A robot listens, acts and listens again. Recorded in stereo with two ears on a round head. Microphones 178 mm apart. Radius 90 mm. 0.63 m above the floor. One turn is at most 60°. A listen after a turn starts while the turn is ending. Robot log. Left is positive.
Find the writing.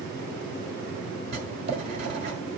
note: The writing: about 55° right or 125° right.
cmd yaw -55
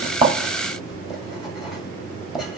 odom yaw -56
end: Found it: writing, straight ahead, 1 to 2 m away.